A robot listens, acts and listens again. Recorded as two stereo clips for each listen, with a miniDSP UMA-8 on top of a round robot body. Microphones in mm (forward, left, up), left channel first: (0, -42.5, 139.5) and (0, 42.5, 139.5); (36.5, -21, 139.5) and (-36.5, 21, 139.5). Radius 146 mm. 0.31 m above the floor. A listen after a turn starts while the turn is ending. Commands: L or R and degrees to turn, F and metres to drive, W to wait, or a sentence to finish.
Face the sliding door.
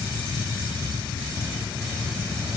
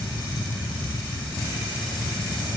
W
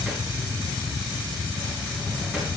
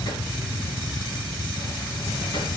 W
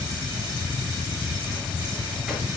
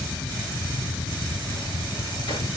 I can't make out a sliding door.